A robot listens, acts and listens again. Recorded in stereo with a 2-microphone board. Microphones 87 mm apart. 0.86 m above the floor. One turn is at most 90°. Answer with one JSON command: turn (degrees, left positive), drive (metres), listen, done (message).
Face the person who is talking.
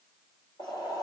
{"listen": true}
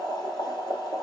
{"listen": true}
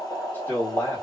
{"turn": 25}
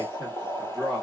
{"done": "Facing the man speaking, 1 to 2 m away."}